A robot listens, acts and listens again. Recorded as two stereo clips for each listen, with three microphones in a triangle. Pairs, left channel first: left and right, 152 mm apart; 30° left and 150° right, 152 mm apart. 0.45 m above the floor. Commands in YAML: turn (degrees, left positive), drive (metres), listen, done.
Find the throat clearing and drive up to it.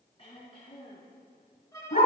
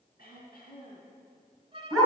turn: 40
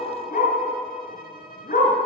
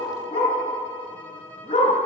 listen: true
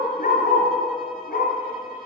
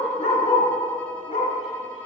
listen: true
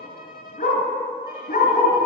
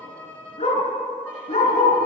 done: "I heard throat clearing from this way, but can't make it out now. I did not reach it."